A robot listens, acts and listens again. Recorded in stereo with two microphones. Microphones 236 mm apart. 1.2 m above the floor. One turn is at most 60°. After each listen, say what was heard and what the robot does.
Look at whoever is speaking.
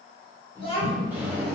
The child speaking: about 25° left or 155° left. Turn 25° left.
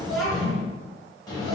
Found it: a child speaking, straight ahead.